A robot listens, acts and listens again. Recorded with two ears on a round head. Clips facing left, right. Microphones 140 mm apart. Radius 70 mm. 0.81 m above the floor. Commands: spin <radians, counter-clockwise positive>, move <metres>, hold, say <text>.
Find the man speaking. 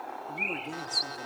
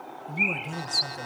spin -1.22
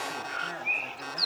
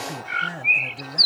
spin -0.52
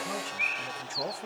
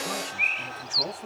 spin 0.26
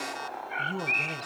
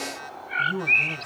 spin 0.17
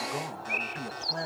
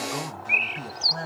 spin 0.26
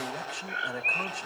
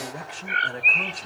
say Facing the man speaking, 2 to 4 m away.